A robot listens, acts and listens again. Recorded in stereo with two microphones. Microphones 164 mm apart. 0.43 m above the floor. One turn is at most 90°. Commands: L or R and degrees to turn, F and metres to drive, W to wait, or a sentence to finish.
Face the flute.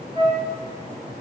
R30
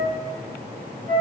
R90
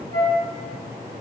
R55
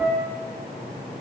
R10
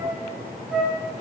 Found it: a flute, straight ahead, 1 to 2 m away.